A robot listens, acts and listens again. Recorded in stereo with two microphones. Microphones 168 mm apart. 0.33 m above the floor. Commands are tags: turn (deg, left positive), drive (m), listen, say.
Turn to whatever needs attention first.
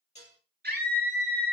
<turn deg="-65"/>
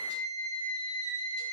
<turn deg="-50"/>
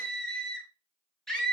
<say>Facing the scream.</say>